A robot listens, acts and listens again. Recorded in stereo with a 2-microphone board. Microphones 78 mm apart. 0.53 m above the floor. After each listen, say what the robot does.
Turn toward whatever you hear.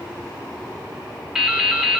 Turn 30° right.
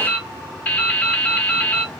Turn 20° left.
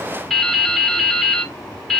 Found it: dripping, straight ahead, 1 to 2 m away.